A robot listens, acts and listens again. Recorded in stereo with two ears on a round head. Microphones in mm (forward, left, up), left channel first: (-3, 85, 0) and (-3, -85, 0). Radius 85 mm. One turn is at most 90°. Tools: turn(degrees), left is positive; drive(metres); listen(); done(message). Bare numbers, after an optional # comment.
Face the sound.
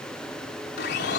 # The blender: about 65° left or 115° left.
turn(65)
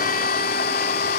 # So it is at 50° left.
turn(50)
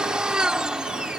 done("Facing the blender.")